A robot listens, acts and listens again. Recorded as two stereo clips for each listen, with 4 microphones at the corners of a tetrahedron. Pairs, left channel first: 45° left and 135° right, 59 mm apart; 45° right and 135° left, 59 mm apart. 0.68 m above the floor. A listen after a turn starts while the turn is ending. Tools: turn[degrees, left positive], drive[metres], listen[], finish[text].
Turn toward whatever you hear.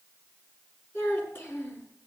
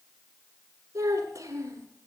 Thought: The child speaking: 95° left.
Action: turn[95]
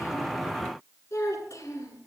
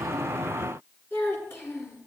Action: finish[Found it: a child speaking, straight ahead.]